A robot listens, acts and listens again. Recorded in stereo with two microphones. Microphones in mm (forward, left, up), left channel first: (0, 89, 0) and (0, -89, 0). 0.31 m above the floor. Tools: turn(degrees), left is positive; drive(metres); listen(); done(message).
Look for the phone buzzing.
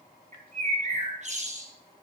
listen()
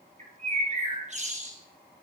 listen()
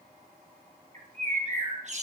done("I can't make out a phone buzzing to turn to.")